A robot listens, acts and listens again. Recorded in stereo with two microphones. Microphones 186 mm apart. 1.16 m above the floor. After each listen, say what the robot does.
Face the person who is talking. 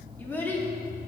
Turn 30° left.
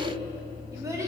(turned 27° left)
Turn 15° right.
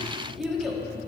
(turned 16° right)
Facing the child speaking, 1 to 2 m away.